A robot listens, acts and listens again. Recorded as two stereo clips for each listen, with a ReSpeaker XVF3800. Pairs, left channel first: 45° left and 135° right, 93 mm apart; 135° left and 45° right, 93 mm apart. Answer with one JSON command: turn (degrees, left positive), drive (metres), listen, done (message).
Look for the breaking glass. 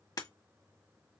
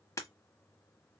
{"turn": 85}
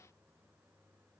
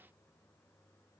{"done": "I heard breaking glass from this way, but can't make it out now."}